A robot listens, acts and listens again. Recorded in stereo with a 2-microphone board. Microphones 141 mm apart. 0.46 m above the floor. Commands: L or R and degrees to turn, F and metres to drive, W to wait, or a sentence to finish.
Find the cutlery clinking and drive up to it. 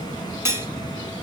R20
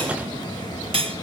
R140
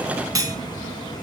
R25
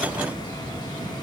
W
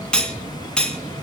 F1.0
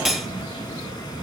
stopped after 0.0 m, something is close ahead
Blocked. The cutlery clinking is further on, straight ahead.